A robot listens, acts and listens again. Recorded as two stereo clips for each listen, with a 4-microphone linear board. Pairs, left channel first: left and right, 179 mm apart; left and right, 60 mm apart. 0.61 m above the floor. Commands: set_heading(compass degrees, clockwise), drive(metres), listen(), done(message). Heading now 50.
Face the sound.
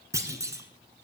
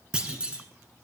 set_heading(65)
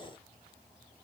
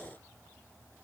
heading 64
listen()
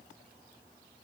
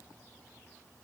done("I heard a clunk, but can't make it out now. It was about 5° right or 150° right.")